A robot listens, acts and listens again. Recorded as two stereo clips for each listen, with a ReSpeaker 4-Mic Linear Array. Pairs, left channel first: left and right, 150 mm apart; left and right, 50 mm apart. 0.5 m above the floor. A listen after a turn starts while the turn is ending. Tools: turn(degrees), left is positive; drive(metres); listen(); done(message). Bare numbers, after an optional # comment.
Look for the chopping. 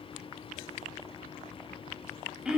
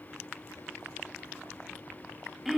listen()
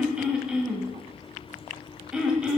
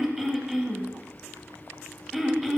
listen()
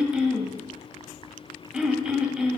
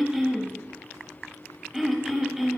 done("I can't make out chopping, only throat clearing.")